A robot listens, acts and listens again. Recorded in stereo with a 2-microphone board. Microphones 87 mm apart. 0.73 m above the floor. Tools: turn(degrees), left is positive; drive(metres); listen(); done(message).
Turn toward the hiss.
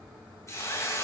turn(degrees=35)
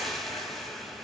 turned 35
done("Facing the hiss, 2 to 4 m away.")